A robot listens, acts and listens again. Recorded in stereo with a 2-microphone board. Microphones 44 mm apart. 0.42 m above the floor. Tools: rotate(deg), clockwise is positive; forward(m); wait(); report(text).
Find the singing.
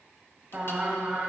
rotate(25)
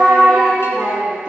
rotate(20)
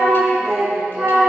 rotate(30)
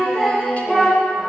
report("Found it: singing, straight ahead, 2 to 4 m away.")